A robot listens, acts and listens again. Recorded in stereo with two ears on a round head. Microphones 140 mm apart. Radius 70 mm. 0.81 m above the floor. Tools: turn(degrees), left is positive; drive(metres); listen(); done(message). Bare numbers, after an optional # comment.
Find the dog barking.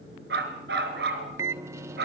# The dog barking: about 75° right or 105° right.
turn(-75)
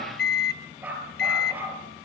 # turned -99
# So it is at 10° right.
turn(-10)
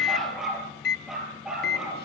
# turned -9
done("Facing the dog barking, over 4 m away.")